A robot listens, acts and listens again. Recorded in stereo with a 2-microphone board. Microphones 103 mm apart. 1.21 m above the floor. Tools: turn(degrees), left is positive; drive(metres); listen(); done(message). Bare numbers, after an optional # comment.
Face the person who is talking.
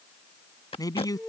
# The man speaking: about 35° left or 145° left.
turn(35)
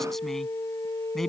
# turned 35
done("Found it: a man speaking, straight ahead.")